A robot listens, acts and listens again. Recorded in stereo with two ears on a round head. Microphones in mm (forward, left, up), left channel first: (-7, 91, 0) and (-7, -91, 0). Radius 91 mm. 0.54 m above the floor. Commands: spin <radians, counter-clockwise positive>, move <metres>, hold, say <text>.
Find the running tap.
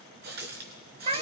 spin -0.87
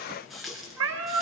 say Facing the running tap, over 4 m away.